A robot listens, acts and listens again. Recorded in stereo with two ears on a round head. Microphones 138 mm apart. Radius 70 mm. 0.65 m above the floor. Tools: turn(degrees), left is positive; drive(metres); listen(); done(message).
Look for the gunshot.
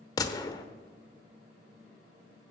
turn(degrees=25)
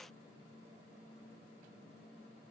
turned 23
listen()
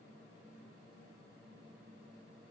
done("I heard a gunshot, but can't make it out now. It was about straight ahead or 130° left.")